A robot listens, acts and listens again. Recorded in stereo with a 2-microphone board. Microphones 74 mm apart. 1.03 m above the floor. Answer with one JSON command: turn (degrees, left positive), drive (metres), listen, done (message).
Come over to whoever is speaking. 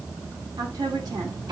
{"turn": -65}
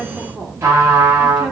{"drive": 1.0}
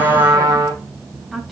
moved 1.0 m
{"drive": 1.0}
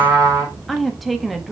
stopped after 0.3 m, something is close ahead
{"done": "I am next to the woman speaking."}